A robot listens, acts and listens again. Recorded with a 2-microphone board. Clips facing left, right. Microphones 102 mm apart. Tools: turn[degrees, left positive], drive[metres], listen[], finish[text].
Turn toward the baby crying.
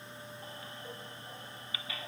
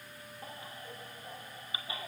Thought: The baby crying: about 25° right or 155° right.
Action: turn[-25]
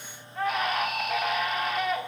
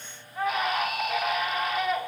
Action: finish[Found it: a baby crying, straight ahead.]